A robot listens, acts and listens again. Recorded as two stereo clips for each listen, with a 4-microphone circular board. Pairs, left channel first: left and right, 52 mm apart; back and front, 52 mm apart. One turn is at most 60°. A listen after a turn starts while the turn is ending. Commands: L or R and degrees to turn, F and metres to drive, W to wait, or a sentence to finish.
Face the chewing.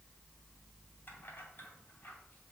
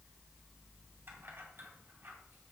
W
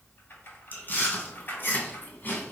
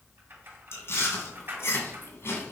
L60
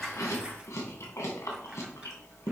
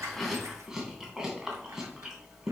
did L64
L60
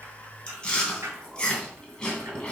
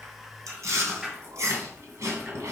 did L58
L20
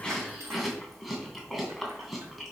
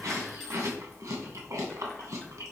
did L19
Facing the chewing, 2 to 4 m away.